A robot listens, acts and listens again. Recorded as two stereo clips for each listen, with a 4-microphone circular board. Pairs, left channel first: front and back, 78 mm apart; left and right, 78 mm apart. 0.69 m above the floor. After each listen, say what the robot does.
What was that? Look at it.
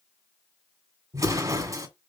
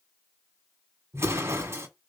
Turn 140° right.
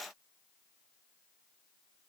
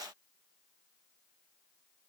Facing where the explosion came from. I can't hear it now.